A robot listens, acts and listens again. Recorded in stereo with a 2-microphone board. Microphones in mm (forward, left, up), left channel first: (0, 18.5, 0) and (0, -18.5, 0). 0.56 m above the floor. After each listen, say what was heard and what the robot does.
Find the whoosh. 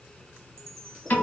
Keep listening.
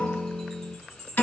Keep listening.
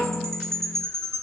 I can't make out a whoosh to turn to.